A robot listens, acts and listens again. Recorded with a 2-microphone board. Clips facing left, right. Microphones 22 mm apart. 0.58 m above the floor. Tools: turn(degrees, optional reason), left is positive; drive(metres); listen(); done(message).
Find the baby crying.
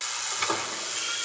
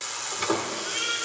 turn(degrees=-35, reason="The baby crying: about 35° right or 145° right.")
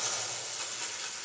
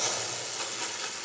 listen()
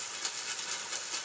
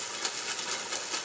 listen()
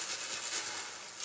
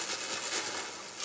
done("I heard a baby crying, but can't make it out now. It was about straight ahead or 110° right.")